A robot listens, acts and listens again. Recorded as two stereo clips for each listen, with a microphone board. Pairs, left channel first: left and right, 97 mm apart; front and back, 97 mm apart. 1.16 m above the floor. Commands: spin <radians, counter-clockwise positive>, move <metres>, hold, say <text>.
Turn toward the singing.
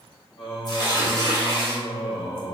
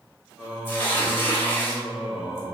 spin 1.83
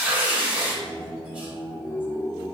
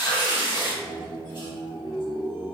spin 0.52
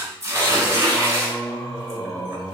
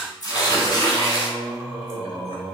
spin 0.17
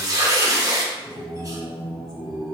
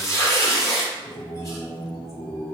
say Facing the singing, 1 to 2 m away.